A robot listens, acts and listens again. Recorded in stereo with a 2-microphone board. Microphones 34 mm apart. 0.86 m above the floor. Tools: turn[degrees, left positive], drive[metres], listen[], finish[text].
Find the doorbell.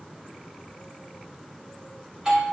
Thought: The doorbell: about 25° right or 155° right.
Action: turn[-25]
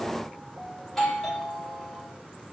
Action: finish[Found it: a doorbell, straight ahead.]